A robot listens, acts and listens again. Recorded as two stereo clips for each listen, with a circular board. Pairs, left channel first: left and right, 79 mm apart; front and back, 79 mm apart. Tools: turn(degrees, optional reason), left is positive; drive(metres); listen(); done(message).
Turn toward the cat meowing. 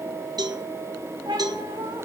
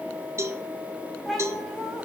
turn(degrees=-90, reason="The cat meowing: 90° right.")
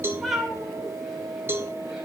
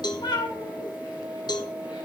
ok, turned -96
done("Facing the cat meowing.")